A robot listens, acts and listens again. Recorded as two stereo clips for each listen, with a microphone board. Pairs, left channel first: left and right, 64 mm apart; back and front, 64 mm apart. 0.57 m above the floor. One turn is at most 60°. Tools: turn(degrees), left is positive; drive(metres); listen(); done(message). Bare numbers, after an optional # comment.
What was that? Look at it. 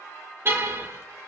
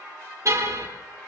# The car horn: 40° right.
turn(-40)
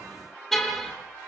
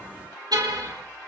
done("Found it: a car horn, straight ahead, over 4 m away.")